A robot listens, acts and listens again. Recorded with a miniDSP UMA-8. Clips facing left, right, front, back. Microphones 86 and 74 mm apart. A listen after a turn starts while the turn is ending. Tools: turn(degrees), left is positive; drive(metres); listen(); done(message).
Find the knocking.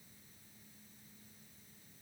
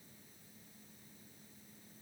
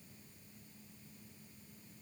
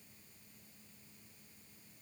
listen()
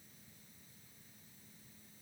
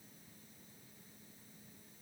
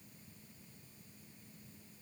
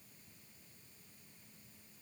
listen()
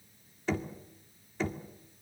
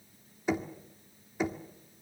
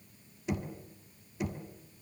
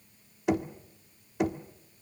turn(degrees=-165)
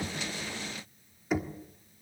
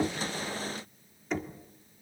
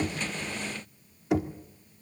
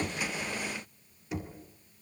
turn(degrees=10)
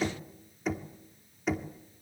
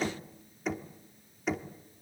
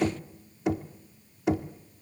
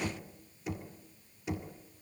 done("Facing the knocking, 1 to 2 m away.")